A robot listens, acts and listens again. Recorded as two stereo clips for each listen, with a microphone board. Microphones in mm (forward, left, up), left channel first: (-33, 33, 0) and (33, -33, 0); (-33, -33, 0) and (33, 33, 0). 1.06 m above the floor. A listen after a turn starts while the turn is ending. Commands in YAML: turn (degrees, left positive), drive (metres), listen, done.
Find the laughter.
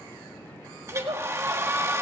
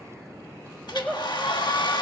turn: -45
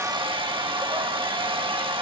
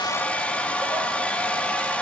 listen: true
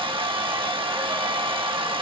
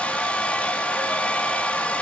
listen: true
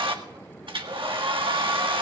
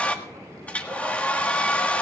done: "Facing where the laughter came from. I can't hear it now."